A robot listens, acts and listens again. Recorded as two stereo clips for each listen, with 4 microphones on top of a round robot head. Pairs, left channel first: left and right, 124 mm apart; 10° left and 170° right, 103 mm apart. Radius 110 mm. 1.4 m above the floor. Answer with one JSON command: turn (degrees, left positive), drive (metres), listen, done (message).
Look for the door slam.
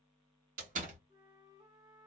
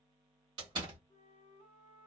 {"turn": -115}
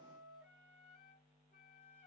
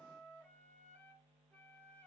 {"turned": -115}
{"done": "I heard a door slam from this way, but can't make it out now."}